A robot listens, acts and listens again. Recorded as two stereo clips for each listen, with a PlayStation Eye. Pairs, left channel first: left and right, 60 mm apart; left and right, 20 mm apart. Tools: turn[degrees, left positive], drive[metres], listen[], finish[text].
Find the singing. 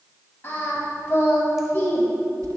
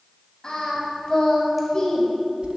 Thought: The singing: about 40° left or 140° left.
Action: turn[40]
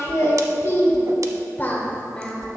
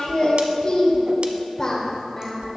Thought: So it is at 15° left.
Action: turn[15]
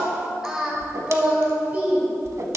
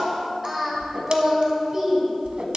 Thought: The singing is now 30° right.
Action: turn[-30]
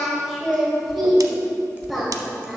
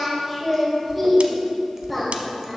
Action: finish[Found it: singing, straight ahead, 1 to 2 m away.]